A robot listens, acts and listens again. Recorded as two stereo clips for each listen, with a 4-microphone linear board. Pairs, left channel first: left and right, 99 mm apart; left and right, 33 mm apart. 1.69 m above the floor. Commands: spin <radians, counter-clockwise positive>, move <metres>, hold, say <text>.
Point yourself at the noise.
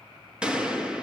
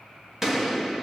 spin -0.52
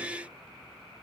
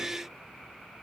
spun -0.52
hold
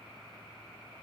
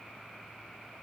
say I heard a gunshot, but can't make it out now. It was about 20° left or 140° right.